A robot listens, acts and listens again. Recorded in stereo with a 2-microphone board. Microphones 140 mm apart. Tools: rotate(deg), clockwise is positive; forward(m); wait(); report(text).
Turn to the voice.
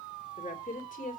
rotate(-90)
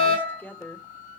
rotate(-15)
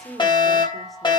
report("Found it: a woman speaking, straight ahead.")